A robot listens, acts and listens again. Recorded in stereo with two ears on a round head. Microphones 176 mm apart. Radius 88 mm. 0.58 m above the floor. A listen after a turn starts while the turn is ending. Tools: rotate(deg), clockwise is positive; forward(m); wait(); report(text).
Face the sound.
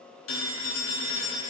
rotate(-75)
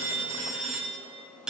report("Found it: a phone ringing, straight ahead.")